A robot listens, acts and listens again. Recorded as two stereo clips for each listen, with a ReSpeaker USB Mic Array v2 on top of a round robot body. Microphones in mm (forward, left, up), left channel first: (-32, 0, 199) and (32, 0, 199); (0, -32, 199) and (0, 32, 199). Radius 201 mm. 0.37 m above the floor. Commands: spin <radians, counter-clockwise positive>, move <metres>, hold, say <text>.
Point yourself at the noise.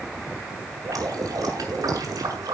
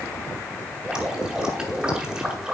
spin 0.26
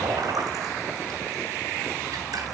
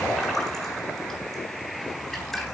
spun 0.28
say Facing the dripping.